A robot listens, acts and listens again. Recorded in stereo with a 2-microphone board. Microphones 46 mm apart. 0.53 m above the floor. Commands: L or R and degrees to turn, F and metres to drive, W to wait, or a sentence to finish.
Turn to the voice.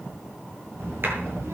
R90
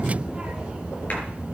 R25
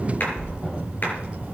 R30
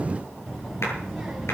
Found it: a child speaking, straight ahead.